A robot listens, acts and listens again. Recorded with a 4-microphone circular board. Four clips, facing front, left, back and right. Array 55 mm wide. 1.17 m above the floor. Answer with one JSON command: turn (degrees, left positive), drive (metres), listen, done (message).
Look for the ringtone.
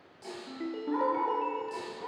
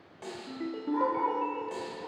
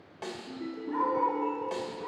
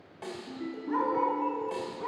{"turn": 40}
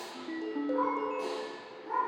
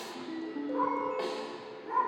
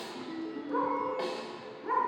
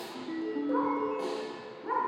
{"turn": -15}
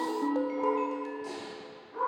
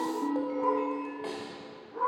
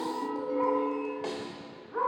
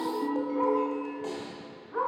{"done": "Facing the ringtone, 1 to 2 m away."}